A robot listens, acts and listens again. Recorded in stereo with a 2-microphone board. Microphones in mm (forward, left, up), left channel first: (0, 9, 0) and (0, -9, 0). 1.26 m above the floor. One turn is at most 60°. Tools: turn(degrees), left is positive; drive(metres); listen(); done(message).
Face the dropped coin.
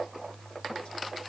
listen()
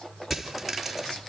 turn(degrees=30)
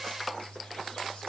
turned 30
listen()
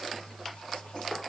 done("I heard a dropped coin, but can't make it out now. It was about 30° right or 150° left.")